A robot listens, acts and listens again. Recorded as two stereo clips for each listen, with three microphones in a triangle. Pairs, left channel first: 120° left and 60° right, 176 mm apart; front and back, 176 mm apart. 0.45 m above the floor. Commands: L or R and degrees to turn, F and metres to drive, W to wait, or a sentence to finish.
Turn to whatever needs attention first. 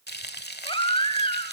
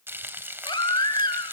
L60
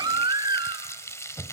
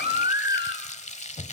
Found it: a baby crying, straight ahead, 2 to 4 m away.